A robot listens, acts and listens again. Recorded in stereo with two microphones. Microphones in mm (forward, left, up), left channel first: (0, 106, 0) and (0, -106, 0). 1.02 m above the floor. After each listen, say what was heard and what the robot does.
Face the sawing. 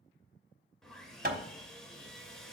Turn 30° left.
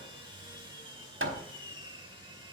So it is at 25° right. Turn 25° right.
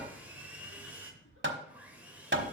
The sawing is now 10° right. Turn 10° right.
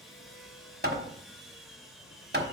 Found it: sawing, straight ahead.